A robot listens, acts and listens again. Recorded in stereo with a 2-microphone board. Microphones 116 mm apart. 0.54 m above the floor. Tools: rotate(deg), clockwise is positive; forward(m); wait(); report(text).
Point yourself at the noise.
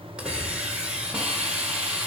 rotate(30)
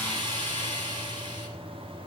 rotate(140)
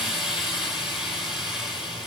report("Found it: a hiss, straight ahead, 1 to 2 m away.")